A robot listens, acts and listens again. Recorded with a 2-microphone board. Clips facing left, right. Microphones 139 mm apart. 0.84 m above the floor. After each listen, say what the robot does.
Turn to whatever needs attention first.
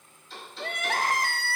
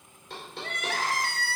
Turn 55° left.
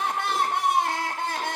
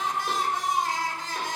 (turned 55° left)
Turn 70° left.
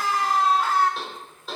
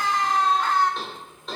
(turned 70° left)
Facing the crying.